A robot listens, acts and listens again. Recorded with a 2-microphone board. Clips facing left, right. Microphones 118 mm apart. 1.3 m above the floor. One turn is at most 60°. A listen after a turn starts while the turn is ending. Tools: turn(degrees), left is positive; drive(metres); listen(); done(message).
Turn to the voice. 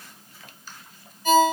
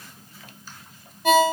listen()
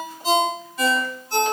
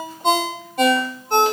listen()
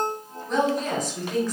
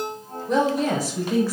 turn(degrees=-30)
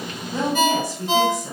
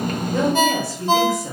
turn(degrees=15)
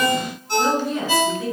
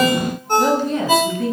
done("Found it: a woman speaking, straight ahead, over 4 m away.")